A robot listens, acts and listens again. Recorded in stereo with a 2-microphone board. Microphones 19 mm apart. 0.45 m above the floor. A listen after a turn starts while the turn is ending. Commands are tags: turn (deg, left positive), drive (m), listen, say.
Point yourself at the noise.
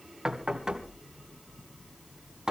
<turn deg="-25"/>
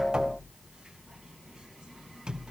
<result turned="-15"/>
<turn deg="-140"/>
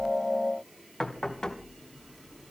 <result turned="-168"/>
<turn deg="30"/>
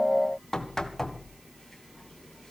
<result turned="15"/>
<turn deg="15"/>
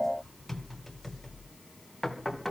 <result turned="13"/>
<say>Facing the knocking, 2 to 4 m away.</say>